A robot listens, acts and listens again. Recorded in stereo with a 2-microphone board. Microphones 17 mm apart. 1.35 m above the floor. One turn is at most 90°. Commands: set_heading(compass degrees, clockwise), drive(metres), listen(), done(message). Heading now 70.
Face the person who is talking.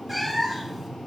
listen()
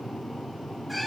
listen()
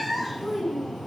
set_heading(20)
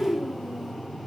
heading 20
done("Facing the child speaking, over 4 m away.")